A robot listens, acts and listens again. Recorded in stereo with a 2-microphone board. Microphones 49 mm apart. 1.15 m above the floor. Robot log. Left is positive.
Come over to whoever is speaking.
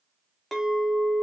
cmd idle
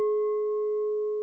cmd idle
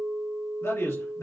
note: The man speaking: about 65° left or 115° left.
cmd yaw +65
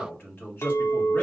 note: So it is at 45° left.
cmd yaw +45
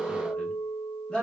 note: The man speaking is now 15° left.
cmd yaw +15
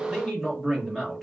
cmd fwd 1.0
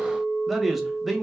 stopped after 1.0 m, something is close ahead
end: Arrived at the man speaking, straight ahead.